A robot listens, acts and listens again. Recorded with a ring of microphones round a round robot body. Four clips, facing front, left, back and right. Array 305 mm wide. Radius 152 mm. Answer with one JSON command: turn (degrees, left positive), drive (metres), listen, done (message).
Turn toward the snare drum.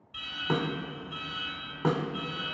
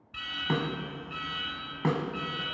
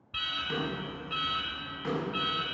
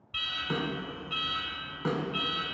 {"turn": 45}
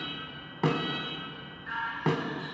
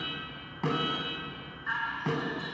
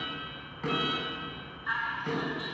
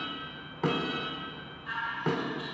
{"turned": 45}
{"done": "Found it: a snare drum, straight ahead, 1 to 2 m away."}